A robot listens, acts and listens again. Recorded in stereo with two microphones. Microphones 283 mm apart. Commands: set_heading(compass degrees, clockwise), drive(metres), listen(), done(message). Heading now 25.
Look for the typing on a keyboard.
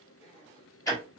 listen()
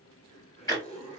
listen()
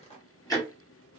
done("I can't make out typing on a keyboard to turn to.")